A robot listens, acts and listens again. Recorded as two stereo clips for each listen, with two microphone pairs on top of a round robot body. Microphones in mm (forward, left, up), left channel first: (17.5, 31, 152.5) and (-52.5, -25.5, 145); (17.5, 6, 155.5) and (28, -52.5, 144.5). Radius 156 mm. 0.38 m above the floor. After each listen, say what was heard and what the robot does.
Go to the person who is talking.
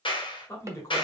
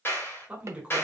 The man speaking: 15° right. Turn 15° right.
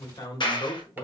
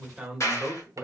Drive 1.0 m forward.
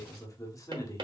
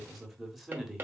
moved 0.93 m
Drive 1.0 m forward.
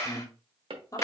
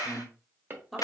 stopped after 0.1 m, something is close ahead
I am next to the man speaking.